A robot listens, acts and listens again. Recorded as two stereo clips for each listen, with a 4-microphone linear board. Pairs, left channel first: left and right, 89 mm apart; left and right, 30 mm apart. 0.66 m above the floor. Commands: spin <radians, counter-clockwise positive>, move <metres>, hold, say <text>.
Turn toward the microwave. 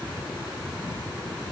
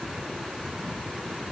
hold
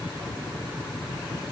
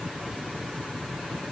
hold
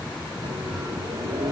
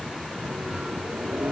spin -1.22
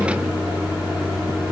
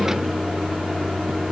spin -0.26
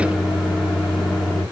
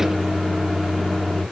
say Facing the microwave, under 1 m away.